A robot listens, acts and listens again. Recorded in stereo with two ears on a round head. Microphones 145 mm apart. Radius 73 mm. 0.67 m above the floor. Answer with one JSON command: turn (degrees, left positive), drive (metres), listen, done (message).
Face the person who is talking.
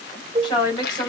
{"turn": 25}
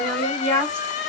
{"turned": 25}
{"done": "Found it: a woman speaking, straight ahead."}